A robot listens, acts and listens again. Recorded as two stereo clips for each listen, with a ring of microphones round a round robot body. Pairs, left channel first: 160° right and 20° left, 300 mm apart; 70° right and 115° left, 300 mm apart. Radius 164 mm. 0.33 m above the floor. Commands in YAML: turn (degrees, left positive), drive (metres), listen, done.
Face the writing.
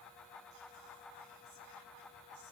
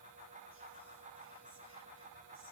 listen: true
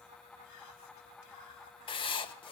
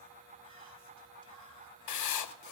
turn: -85
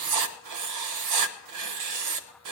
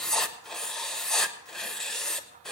turn: 20
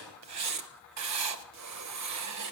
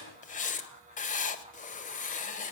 done: "Facing the writing."